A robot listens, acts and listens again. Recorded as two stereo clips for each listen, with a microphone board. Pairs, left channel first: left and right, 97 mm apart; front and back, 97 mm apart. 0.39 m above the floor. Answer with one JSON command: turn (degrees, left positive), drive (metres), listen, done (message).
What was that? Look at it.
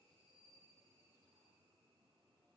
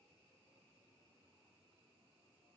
{"listen": true}
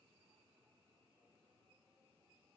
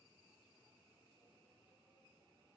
{"listen": true}
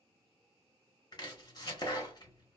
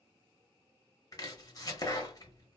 {"turn": 50}
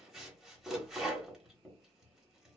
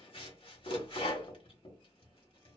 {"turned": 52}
{"done": "Found it: chopping, straight ahead, 1 to 2 m away."}